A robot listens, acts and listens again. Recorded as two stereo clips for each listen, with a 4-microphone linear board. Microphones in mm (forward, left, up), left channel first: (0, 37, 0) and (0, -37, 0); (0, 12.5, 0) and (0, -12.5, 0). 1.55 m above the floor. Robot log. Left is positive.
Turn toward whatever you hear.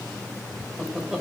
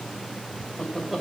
cmd yaw -30
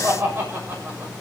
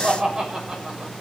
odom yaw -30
note: So it is at 150° right.
cmd yaw -150
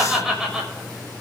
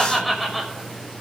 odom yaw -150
end: Facing the laughter.